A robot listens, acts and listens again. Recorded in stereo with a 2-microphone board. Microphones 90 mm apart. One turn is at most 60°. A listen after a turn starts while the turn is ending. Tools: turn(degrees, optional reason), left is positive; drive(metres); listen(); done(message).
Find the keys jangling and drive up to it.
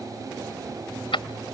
turn(degrees=60)
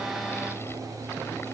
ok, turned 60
turn(degrees=30, reason="Nothing new. It was at 30° left.")
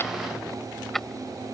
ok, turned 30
drive(metres=1.0)
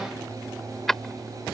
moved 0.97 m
drive(metres=1.0)
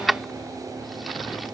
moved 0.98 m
drive(metres=1.0)
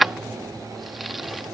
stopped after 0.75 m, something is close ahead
done("Arrived at the keys jangling, straight ahead.")